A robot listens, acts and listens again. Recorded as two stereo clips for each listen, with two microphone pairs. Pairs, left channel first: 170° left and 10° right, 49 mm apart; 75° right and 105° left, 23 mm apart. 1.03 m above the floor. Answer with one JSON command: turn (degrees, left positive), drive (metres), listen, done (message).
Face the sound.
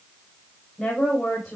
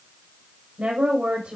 {"turn": 95}
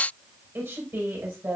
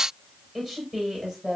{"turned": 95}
{"done": "Found it: a woman speaking, straight ahead, over 4 m away."}